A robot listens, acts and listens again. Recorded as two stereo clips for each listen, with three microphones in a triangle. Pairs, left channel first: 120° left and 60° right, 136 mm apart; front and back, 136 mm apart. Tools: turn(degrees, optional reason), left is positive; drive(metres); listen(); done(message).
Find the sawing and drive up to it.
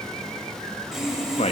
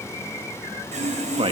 turn(degrees=-145, reason="The sawing: 145° right.")
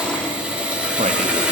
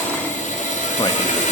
turn(degrees=20, reason="The sawing is now 20° left.")
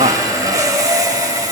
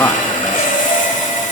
drive(metres=1.0)
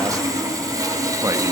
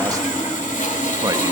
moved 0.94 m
drive(metres=1.0)
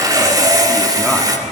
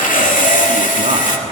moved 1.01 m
drive(metres=1.0)
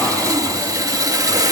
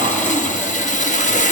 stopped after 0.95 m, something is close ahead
done("I am next to the sawing.")